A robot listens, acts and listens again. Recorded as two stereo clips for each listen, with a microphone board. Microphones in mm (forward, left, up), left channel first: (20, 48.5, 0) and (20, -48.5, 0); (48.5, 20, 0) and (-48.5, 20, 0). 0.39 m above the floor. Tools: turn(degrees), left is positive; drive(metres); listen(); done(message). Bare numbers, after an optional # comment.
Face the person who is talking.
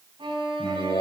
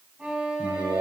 # The man speaking: 140° left.
turn(140)
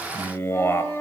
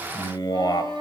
# The man speaking is now 30° left.
turn(30)
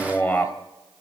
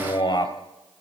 # The man speaking is now 15° left.
turn(15)
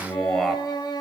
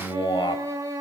done("Found it: a man speaking, straight ahead.")